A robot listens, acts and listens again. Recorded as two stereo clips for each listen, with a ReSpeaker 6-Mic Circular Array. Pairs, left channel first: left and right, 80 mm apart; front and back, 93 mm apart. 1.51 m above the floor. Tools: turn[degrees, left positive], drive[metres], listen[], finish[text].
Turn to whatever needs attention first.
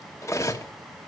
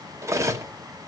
Action: listen[]
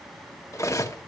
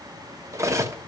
Action: listen[]
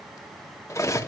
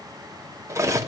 Action: finish[I can't make out anything urgent, only cutlery clinking.]